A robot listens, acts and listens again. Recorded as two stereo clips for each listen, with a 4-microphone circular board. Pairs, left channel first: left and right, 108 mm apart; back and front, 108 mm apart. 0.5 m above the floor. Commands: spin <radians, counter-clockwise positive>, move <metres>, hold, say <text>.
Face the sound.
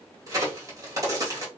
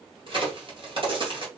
spin -0.61
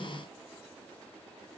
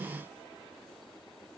say Facing where the crack came from. I can't hear it now.